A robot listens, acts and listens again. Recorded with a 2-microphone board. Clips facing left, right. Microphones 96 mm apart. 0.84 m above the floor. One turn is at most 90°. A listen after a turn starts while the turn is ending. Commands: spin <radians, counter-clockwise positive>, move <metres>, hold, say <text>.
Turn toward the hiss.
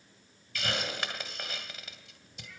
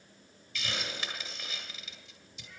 spin 0.96
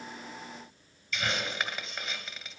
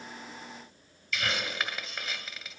say Found it: a hiss, straight ahead.